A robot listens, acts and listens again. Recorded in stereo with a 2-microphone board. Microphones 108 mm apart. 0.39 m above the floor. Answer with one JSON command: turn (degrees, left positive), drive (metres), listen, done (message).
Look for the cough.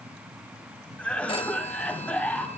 {"turn": 30}
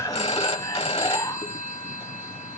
{"turn": 135}
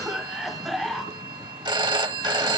{"done": "Found it: a cough, straight ahead."}